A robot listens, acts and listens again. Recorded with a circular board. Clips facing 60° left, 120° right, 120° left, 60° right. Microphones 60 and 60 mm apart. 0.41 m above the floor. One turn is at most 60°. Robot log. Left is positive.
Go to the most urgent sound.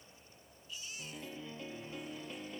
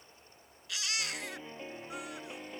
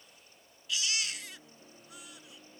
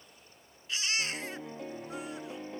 note: The baby crying: 115° right.
cmd yaw -60
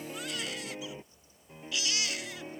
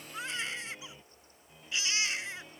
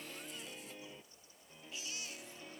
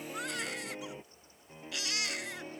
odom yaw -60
note: The baby crying is now 60° right.
cmd yaw -60
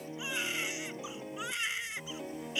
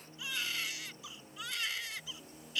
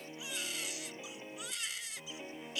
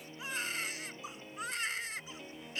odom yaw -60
note: The baby crying is now 10° right.
cmd yaw -10
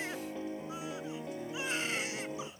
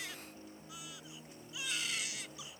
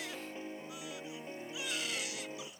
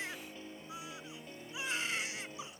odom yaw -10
cmd fwd 1.0
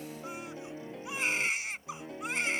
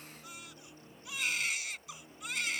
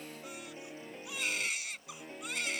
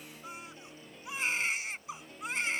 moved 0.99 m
cmd fwd 1.0
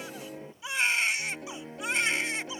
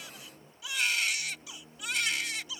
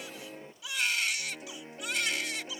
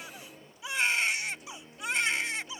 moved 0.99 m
cmd fwd 1.0
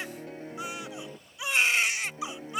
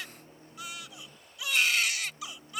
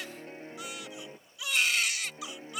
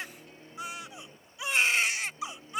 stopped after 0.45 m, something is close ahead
end: I am next to the baby crying.